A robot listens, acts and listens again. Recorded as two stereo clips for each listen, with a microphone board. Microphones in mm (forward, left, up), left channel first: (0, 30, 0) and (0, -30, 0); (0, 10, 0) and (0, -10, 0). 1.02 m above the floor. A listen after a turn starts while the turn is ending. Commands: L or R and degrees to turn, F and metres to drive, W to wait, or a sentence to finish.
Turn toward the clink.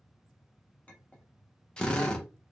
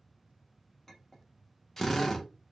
L20
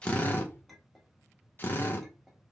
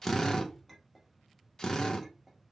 Found it: a clink, straight ahead.